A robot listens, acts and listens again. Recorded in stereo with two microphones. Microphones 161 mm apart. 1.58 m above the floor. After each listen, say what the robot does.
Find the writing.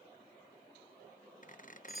Keep listening.
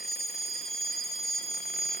Keep listening.
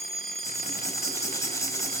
Turn 20° left.
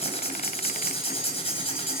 Turn 140° left.
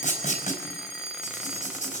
Turn 50° left.
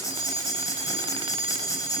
Turn 20° left.
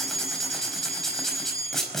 Facing the writing, over 4 m away.